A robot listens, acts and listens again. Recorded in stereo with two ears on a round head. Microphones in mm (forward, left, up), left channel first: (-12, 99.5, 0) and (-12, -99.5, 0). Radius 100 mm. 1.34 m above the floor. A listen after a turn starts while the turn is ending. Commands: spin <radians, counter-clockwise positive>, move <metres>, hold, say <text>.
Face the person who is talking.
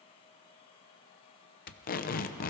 hold
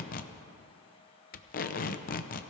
hold
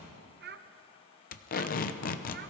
spin -0.79
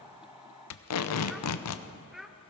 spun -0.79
say Found it: a child speaking, straight ahead.